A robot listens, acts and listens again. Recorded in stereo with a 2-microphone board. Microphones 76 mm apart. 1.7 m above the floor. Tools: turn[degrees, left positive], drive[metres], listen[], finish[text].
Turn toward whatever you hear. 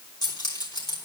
Thought: The keys jangling: about 70° left or 110° left.
Action: turn[70]
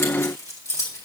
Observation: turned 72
Thought: So it is at 45° left.
Action: turn[45]
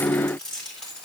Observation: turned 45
Thought: The keys jangling is now 10° left.
Action: turn[10]
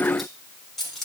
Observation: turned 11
Action: finish[Facing the keys jangling, 2 to 4 m away.]